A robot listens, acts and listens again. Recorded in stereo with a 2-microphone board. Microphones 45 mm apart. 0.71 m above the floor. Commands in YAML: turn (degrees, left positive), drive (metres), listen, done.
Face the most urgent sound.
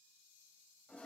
listen: true
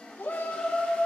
turn: 55
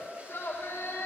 turn: 65
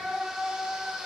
turn: -20
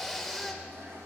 done: "Found it: a shout, straight ahead, 2 to 4 m away."